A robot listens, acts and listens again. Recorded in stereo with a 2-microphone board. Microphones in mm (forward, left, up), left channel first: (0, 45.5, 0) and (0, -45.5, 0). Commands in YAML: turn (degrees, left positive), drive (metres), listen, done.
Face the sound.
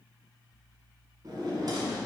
turn: -50
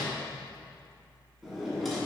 done: "Found it: a drawer, straight ahead, 1 to 2 m away."